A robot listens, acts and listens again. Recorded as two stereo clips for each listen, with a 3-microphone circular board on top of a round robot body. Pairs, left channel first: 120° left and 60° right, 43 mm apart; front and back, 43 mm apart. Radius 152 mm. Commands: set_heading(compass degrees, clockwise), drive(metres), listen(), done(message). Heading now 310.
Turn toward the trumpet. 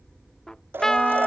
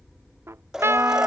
set_heading(110)
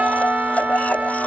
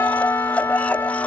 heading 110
done("Found it: a trumpet, straight ahead.")